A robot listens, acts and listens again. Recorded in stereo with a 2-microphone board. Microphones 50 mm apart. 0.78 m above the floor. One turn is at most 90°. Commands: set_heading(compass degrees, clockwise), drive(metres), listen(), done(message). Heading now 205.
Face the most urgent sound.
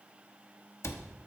listen()
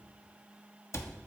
listen()
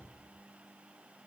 done("I can't make out anything urgent, only a cupboard door.")